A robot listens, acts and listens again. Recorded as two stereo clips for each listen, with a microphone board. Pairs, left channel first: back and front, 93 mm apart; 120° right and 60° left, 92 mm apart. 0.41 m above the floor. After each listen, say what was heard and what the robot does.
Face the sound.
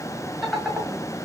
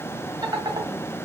The laughter: 90° left. Turn 90° left.
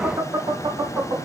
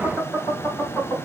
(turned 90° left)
The laughter is now 20° right. Turn 20° right.
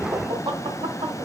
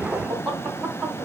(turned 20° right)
The laughter is now 10° right. Turn 10° right.
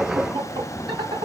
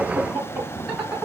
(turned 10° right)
The laughter is now 10° right. Turn 10° right.
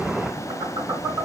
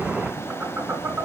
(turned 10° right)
Found it: laughter, straight ahead, 2 to 4 m away.